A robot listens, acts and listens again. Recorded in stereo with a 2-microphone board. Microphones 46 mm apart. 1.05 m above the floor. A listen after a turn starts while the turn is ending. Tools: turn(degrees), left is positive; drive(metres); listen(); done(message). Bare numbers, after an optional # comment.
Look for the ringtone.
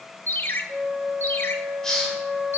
# The ringtone: about 55° left or 125° left.
turn(55)
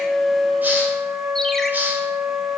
listen()
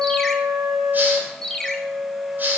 # So it is at 10° left.
turn(10)
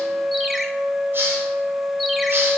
listen()
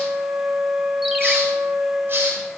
listen()
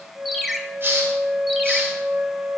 done("Facing the ringtone.")